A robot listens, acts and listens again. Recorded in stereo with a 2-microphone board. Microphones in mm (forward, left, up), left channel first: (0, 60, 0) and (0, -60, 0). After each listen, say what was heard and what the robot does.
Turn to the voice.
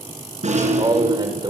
The man speaking: about 40° right or 140° right. Turn 40° right.
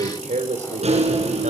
So it is at 100° right. Turn 100° right.
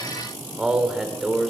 Facing the man speaking, over 4 m away.